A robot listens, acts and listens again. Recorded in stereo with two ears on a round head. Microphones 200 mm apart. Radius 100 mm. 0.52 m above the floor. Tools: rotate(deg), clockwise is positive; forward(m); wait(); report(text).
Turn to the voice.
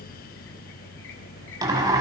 wait()
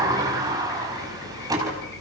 wait()
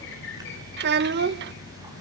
rotate(50)
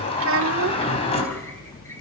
wait()
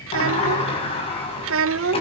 rotate(75)
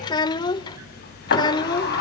rotate(-20)
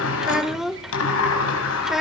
report("Found it: a child speaking, straight ahead.")